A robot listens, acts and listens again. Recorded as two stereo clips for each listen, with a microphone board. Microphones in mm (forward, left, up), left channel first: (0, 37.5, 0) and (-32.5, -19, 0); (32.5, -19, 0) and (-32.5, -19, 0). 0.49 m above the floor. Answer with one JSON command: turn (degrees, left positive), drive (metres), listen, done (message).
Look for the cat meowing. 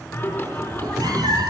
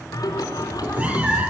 {"turn": -115}
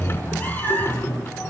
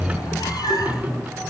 {"done": "Facing the cat meowing, 2 to 4 m away."}